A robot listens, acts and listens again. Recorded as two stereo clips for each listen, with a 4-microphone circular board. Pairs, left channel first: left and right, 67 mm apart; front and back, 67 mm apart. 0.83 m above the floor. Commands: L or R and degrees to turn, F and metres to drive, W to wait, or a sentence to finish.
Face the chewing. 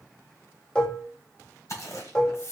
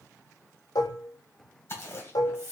L50
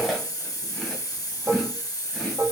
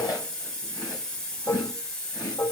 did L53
Facing the chewing.